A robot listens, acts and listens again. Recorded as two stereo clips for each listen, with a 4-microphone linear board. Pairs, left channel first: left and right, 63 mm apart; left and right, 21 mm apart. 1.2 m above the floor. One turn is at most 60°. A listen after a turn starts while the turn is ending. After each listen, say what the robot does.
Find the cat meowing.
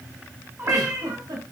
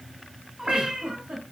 Turn 35° right.
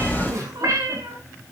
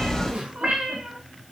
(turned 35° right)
Turn 60° right.
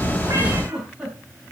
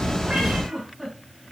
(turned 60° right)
Turn 50° right.
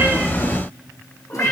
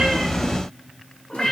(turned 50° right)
Turn 30° left.
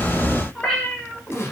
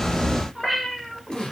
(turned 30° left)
Turn 10° left.
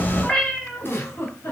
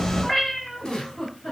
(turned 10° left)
Turn 10° left.
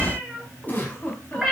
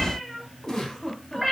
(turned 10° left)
Found it: a cat meowing, straight ahead, over 4 m away.